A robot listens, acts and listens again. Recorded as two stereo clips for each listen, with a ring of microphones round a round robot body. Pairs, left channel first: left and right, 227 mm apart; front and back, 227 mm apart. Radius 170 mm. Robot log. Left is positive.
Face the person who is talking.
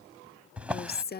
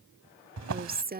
note: The woman speaking: 135° left.
cmd yaw +135
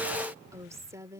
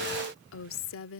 note: The woman speaking is now 10° right.
cmd yaw -10
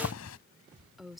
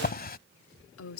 end: Found it: a woman speaking, straight ahead.